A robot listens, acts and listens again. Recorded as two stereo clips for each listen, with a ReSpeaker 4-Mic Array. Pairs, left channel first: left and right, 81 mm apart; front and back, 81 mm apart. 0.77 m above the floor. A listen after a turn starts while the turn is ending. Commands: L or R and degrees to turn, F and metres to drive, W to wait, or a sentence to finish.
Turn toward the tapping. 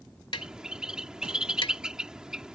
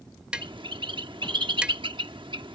L100
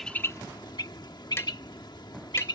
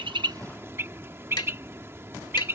W
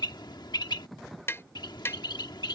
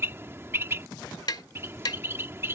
L30
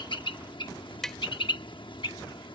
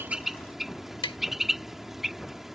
Found it: tapping, straight ahead.